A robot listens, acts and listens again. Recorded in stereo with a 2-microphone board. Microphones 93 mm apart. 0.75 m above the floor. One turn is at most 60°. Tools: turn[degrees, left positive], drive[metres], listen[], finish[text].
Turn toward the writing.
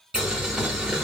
Action: listen[]
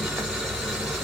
Action: listen[]
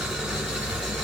Action: finish[I can't make out writing, only boiling.]